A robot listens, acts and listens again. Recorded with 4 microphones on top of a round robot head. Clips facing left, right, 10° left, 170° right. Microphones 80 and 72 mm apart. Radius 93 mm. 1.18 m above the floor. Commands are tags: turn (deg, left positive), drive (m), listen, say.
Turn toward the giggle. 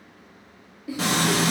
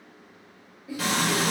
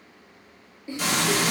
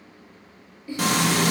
<turn deg="80"/>
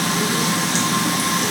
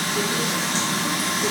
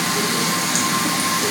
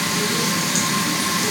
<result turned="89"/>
<turn deg="-10"/>
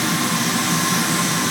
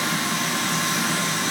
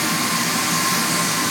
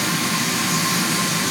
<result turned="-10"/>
<listen/>
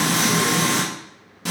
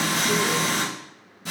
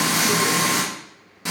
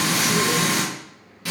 <say>I heard a giggle from this way, but can't make it out now.</say>